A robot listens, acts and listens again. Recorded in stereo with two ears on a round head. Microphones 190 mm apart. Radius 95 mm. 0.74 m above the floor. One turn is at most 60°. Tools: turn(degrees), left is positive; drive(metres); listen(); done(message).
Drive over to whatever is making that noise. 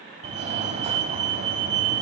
turn(degrees=-30)
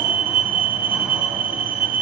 turn(degrees=-10)
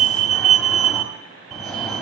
drive(metres=1.0)
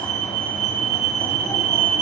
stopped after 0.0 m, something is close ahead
done("Blocked. The fire alarm is further on, straight ahead.")